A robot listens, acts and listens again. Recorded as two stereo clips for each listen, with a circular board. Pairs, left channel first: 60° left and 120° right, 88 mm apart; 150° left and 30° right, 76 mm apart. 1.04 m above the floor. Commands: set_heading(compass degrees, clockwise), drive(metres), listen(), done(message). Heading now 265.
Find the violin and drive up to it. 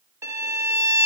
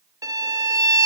set_heading(330)
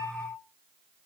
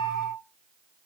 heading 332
drive(1.0)
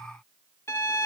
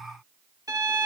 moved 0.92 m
drive(1.0)
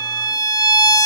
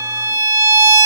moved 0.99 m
set_heading(317)
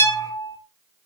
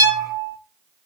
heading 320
drive(1.0)
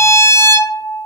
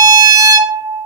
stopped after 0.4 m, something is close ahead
done("I am next to the violin.")